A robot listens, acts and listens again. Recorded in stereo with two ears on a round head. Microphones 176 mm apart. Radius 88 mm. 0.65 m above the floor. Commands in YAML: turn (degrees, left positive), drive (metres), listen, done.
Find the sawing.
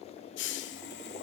turn: 55
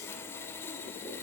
turn: 15
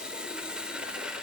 done: "Facing the sawing."